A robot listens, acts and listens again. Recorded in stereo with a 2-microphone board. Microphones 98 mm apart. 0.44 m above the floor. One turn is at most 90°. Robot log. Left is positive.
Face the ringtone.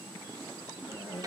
cmd idle
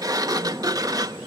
cmd idle
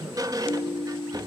note: The ringtone: about 35° left or 145° left.
cmd yaw +35
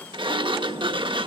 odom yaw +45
cmd idle
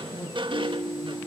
note: So it is at 105° left.
cmd yaw +90
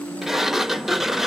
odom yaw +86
note: The ringtone is now 20° left.
cmd yaw +20
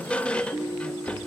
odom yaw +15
end: Found it: a ringtone, straight ahead.